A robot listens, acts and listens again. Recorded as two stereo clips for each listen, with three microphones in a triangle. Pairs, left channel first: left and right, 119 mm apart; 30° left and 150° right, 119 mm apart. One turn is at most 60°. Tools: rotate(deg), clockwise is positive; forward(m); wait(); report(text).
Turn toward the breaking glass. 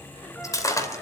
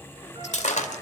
rotate(-30)
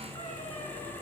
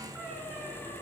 report("Facing where the breaking glass came from. I can't hear it now.")